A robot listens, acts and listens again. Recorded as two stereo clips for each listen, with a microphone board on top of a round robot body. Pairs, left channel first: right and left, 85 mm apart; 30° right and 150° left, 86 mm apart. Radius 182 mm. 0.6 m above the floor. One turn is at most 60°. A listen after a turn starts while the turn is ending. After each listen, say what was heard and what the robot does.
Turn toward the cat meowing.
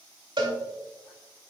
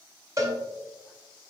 Keep listening.
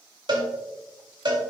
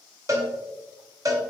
Keep listening.
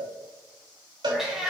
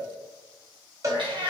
The cat meowing: 175° left. Turn 60° left.
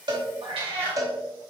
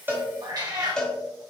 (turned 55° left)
The cat meowing is now 100° left. Turn 60° left.
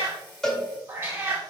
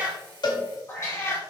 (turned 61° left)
The cat meowing is now 25° left. Turn 25° left.
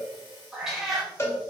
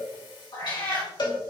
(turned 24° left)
Found it: a cat meowing, straight ahead, 2 to 4 m away.